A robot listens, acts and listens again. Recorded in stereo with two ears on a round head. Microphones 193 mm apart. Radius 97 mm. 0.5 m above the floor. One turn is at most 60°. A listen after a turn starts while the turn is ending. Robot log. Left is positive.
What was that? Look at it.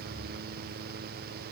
cmd idle
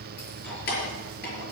note: The keys jangling: about 50° left or 130° left.
cmd yaw +50
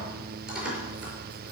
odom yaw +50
end: Found it: keys jangling, straight ahead, over 4 m away.